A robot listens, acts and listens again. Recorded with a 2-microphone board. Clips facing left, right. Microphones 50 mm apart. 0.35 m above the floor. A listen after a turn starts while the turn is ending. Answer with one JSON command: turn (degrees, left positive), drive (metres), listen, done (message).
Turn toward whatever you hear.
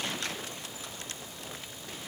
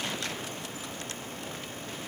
{"listen": true}
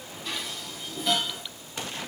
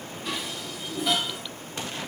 {"turn": -30}
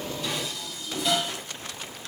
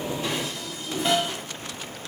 {"turn": -145}
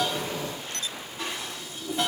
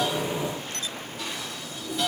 {"turn": 30}
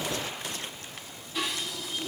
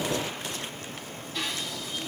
{"done": "Found it: dishes clattering, straight ahead, 1 to 2 m away."}